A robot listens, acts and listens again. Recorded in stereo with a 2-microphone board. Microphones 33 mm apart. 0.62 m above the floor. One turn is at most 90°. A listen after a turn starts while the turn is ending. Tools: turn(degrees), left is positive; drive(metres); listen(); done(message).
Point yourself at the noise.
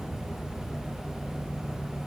listen()
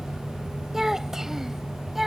turn(degrees=-30)
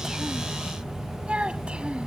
turn(degrees=-90)
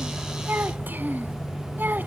turn(degrees=-70)
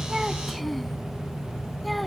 listen()
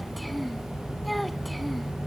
done("Found it: a child speaking, straight ahead.")